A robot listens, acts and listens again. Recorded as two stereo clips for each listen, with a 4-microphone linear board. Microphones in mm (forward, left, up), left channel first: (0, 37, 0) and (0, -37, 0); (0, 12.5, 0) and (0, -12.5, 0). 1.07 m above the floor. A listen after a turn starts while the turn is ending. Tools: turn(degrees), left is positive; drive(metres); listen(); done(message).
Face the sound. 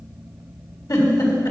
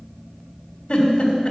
turn(degrees=60)
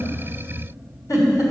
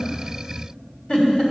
turn(degrees=55)
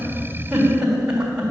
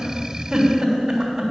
turn(degrees=-10)
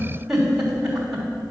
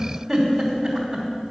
done("Found it: a giggle, straight ahead.")